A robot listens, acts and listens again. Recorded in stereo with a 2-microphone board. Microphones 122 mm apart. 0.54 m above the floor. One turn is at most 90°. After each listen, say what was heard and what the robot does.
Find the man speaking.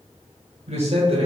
The man speaking: about 55° right or 125° right. Turn 55° right.
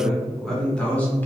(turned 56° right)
So it is at 15° left. Turn 15° left.
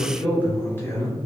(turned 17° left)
The man speaking is now 25° left. Turn 25° left.
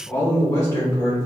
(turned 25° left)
The man speaking is now 30° left. Turn 30° left.
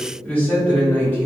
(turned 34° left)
The man speaking is now 15° left. Turn 15° left.
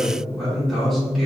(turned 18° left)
Facing the man speaking.